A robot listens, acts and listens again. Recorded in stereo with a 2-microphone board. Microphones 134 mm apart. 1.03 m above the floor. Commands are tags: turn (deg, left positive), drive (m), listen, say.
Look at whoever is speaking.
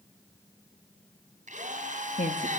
<turn deg="75"/>
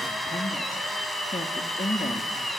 <turn deg="50"/>
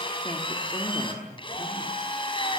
<turn deg="25"/>
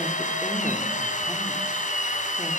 <listen/>
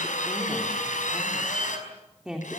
<say>Facing the woman speaking, 2 to 4 m away.</say>